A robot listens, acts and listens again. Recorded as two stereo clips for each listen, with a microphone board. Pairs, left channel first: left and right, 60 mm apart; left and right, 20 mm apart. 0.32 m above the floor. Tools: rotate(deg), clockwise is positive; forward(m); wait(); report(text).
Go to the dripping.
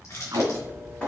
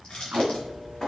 rotate(-20)
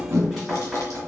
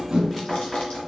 forward(1.0)
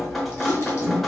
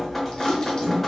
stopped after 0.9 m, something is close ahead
report("Arrived at the dripping, straight ahead.")